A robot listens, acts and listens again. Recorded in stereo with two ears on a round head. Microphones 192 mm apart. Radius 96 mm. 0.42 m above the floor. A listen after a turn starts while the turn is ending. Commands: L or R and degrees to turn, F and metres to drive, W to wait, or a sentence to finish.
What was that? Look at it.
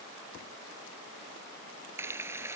R30
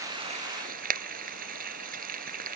R135
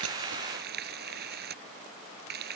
R50
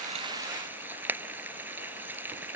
R10
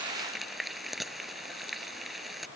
Found it: frying, straight ahead.